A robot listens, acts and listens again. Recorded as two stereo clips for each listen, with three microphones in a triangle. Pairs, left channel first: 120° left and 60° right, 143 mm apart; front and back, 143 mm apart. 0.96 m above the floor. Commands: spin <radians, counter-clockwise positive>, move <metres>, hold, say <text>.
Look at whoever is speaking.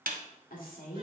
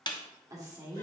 spin 2.09
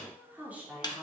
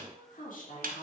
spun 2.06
spin 0.44
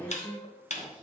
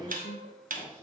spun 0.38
spin 0.35
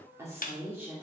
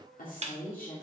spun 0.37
spin 0.35
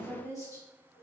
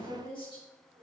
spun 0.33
spin 0.17
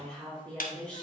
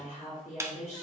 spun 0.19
say Found it: a woman speaking, straight ahead, 2 to 4 m away.